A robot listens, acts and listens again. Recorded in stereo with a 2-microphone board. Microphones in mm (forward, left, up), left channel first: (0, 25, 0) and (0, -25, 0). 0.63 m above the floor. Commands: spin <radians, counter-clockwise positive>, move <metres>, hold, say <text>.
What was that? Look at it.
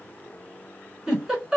spin -0.52
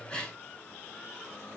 spin 0.26
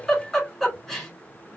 say Facing the giggle.